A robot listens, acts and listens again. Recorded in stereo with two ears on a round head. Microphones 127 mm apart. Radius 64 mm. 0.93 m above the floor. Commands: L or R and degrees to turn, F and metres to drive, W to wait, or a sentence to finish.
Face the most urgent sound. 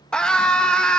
L30
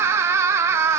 R20
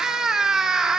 Found it: a scream, straight ahead, 1 to 2 m away.